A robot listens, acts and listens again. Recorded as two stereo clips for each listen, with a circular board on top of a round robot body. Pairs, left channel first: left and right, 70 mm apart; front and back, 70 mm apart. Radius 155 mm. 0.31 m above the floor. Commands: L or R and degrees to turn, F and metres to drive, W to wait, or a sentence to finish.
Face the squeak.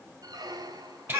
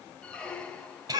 R75
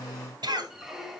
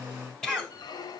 Facing the squeak.